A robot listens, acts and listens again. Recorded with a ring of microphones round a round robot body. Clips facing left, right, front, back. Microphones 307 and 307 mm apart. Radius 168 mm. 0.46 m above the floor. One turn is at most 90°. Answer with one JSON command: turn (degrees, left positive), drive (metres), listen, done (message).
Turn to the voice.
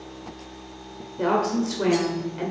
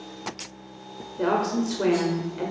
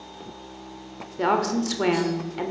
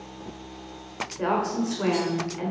{"done": "Facing the woman speaking."}